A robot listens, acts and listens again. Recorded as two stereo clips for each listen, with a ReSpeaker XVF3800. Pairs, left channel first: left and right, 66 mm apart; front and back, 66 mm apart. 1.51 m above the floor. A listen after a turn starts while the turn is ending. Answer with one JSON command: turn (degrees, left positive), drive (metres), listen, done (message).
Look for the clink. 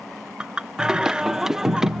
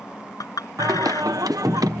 {"turn": -15}
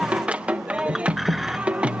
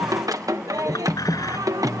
{"listen": true}
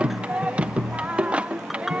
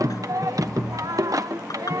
{"listen": true}
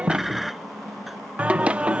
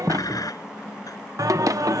{"done": "Facing where the clink came from. I can't hear it now."}